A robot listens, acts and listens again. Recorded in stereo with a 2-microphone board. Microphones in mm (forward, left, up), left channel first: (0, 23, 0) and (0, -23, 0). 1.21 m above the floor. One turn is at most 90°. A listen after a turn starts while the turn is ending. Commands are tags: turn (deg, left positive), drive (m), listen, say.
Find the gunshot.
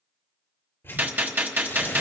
<turn deg="-55"/>
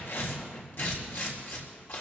<listen/>
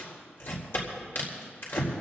<say>I heard a gunshot, but can't make it out now. It was about straight ahead or 70° right.</say>